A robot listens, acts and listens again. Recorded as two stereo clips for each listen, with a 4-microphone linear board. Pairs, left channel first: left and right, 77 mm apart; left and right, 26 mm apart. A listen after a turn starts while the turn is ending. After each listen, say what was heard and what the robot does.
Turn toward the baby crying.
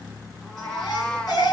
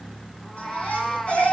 The baby crying: about 55° left or 125° left. Turn 55° left.
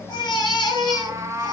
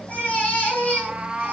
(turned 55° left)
So it is at 65° left. Turn 65° left.
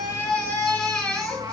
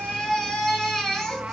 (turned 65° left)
The baby crying is now 15° left. Turn 15° left.
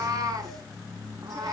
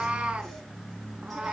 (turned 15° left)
Keep listening.
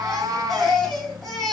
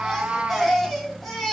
Facing the baby crying.